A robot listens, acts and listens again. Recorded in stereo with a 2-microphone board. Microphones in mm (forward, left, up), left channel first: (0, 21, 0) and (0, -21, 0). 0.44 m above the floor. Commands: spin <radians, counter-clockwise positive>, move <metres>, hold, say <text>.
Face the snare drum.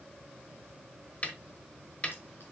spin 0.61
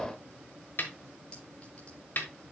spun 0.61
spin 1.92
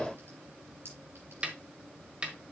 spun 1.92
spin -0.44
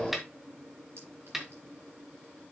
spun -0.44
say Found it: a snare drum, straight ahead, 1 to 2 m away.